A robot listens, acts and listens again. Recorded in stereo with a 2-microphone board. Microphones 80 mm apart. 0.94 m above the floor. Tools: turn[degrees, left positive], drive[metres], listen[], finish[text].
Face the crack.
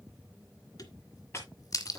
Thought: The crack: about 50° left or 130° left.
Action: turn[50]
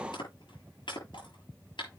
Action: listen[]
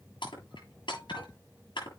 Action: finish[I heard a crack, but can't make it out now. It was about straight ahead or 80° left.]